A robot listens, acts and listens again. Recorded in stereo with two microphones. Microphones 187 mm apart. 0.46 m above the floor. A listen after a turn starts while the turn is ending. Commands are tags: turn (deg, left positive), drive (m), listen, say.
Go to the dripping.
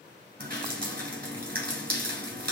<turn deg="-55"/>
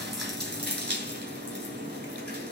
<turn deg="-65"/>
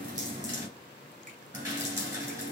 <turn deg="-20"/>
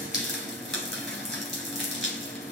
<drive m="1.0"/>
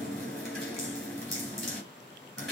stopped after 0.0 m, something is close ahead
<say>Blocked. The dripping is further on, straight ahead.</say>